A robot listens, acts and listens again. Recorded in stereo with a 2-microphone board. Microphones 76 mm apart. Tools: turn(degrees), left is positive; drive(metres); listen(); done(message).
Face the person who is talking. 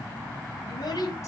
turn(degrees=65)
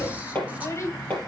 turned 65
turn(degrees=40)
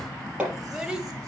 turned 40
turn(degrees=-10)
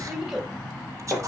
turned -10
done("Facing the child speaking, 2 to 4 m away.")